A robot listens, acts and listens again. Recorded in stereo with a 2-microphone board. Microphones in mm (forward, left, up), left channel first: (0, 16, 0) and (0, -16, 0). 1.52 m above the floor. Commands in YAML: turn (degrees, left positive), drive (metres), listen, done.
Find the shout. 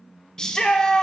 turn: 25
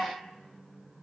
listen: true
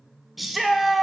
done: "Facing the shout."